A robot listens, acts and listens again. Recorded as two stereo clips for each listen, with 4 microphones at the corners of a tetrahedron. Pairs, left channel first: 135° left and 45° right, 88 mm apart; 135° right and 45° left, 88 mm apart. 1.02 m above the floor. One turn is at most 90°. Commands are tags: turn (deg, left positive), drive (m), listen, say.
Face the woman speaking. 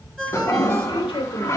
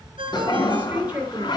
<turn deg="90"/>
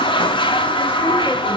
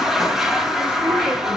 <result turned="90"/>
<turn deg="30"/>
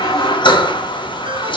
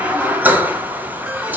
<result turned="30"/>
<listen/>
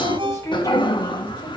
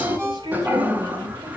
<turn deg="80"/>
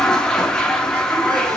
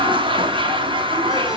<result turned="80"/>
<listen/>
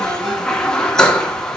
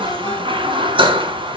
<listen/>
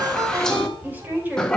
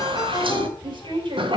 <turn deg="25"/>
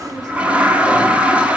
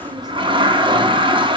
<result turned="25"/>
<listen/>
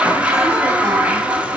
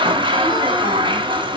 <listen/>
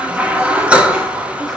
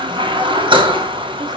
<say>Facing where the woman speaking came from. I can't hear it now.</say>